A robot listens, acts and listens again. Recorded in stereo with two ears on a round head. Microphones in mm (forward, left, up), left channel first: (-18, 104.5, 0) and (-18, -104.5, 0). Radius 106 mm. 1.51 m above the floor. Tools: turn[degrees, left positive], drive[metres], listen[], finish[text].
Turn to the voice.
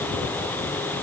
Action: listen[]
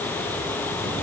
Action: listen[]
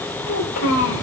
Thought: The child speaking: about 70° left or 110° left.
Action: turn[70]
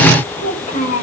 Thought: So it is at 35° left.
Action: turn[35]
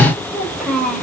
Action: finish[Found it: a child speaking, straight ahead, over 4 m away.]